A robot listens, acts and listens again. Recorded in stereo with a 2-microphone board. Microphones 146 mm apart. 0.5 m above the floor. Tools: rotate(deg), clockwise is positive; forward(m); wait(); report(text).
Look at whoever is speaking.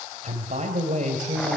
rotate(55)
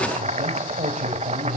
rotate(60)
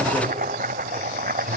wait()
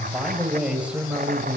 rotate(10)
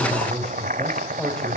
report("Found it: a man speaking, straight ahead.")